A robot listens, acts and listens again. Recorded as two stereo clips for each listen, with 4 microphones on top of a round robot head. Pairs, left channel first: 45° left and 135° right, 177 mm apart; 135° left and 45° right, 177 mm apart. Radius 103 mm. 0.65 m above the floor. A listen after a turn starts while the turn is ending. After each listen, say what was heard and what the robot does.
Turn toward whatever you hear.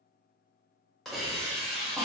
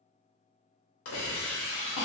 The hiss: 135° left. Turn 135° left.
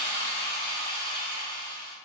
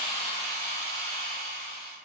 Facing the hiss, under 1 m away.